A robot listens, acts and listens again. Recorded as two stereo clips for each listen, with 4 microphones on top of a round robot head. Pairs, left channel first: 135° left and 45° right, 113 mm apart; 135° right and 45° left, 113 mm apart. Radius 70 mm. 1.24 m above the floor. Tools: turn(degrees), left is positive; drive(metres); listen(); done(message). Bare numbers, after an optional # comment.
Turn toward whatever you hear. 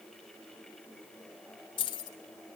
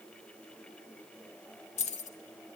# The keys jangling: 165° right.
turn(-165)
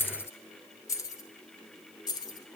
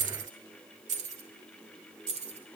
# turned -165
# The keys jangling is now 80° left.
turn(80)
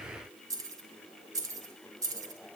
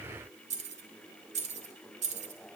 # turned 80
# The keys jangling is now 15° left.
turn(15)
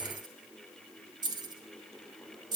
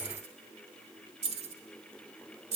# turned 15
# The keys jangling is now 10° left.
turn(10)
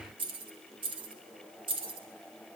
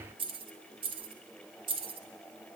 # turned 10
done("Found it: keys jangling, straight ahead, 2 to 4 m away.")